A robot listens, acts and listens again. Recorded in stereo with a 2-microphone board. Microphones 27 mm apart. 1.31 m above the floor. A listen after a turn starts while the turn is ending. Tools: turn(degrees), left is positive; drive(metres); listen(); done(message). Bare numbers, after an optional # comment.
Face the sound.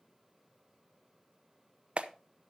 # The clap: about 45° right or 135° right.
turn(-45)
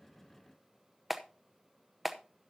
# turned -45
done("Facing the clap, under 1 m away.")